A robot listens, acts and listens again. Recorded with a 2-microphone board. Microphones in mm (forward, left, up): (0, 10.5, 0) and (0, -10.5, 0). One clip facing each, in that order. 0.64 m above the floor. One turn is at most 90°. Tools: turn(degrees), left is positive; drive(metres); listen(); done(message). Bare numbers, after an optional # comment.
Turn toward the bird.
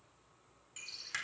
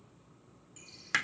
# The bird: about 35° left or 145° left.
turn(35)
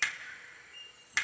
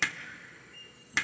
done("Found it: a bird, straight ahead, 1 to 2 m away.")